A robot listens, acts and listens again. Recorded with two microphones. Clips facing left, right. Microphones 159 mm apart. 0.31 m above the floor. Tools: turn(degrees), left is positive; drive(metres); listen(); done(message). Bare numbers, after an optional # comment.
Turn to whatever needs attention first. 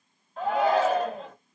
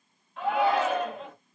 # The shout: about 40° left or 140° left.
turn(40)
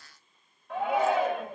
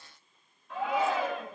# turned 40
# So it is at 90° left.
turn(90)
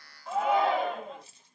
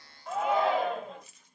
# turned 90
done("Found it: a shout, straight ahead, 1 to 2 m away.")